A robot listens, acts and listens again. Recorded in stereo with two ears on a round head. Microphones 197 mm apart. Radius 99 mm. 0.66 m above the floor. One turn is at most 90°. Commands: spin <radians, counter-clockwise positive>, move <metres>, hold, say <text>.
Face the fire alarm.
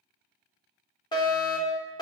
spin 0.35
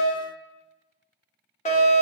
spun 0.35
spin 1.57
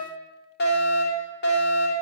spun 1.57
spin 1.05
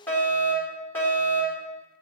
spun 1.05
spin 0.17
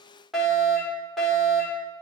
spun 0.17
say Found it: a fire alarm, straight ahead.